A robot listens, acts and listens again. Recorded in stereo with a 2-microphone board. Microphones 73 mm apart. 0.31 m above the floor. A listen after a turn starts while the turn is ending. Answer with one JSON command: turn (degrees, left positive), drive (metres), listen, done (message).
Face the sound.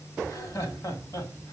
{"turn": 55}
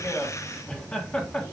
{"turn": 20}
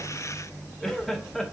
{"done": "Facing the laughter."}